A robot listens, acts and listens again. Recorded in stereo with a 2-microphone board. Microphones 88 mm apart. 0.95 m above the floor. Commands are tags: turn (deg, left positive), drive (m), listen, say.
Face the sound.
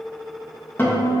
<turn deg="20"/>
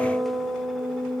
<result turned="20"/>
<say>Found it: a guitar, straight ahead, 1 to 2 m away.</say>